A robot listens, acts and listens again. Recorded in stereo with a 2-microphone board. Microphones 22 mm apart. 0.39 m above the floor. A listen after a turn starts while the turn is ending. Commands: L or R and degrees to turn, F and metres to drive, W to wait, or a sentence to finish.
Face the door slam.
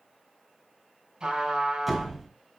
R30
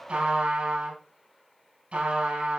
W
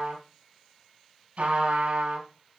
I heard a door slam, but can't make it out now. It was about 20° left or 140° right.